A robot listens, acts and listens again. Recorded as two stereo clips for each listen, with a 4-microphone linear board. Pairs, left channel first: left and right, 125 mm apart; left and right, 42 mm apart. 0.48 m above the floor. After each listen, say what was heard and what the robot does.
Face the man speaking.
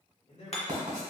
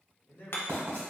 The man speaking: about 65° left or 115° left. Turn 65° left.
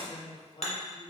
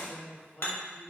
So it is at 40° left. Turn 40° left.
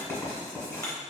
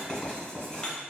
Keep listening.
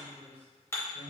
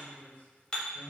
The man speaking is now 55° left. Turn 55° left.
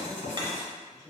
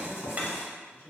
The man speaking is now 30° left. Turn 30° left.
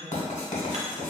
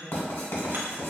Keep listening.
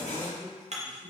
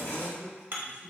Found it: a man speaking, straight ahead.